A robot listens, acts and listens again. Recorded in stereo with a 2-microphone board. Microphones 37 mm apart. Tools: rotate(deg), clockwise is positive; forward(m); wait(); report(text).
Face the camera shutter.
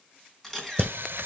rotate(-30)
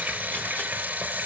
wait()
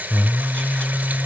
wait()
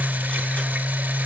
report("I heard a camera shutter, but can't make it out now. It was about 25° right or 145° left.")